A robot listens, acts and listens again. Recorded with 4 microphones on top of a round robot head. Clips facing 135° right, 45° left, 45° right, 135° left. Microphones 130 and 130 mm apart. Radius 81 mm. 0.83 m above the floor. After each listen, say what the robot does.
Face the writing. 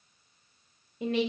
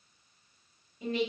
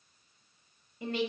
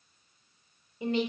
Keep listening.
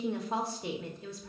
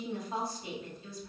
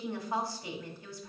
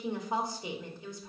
Keep listening.
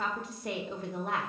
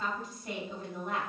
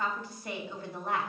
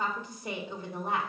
I can't make out writing to turn to.